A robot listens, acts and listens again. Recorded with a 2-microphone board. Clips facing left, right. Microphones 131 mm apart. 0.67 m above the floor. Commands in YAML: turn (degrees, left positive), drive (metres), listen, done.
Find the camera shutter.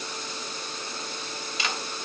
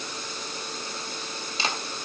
turn: -30
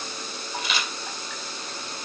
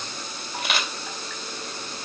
turn: -120
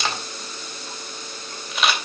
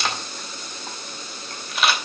done: "Found it: a camera shutter, straight ahead, 2 to 4 m away."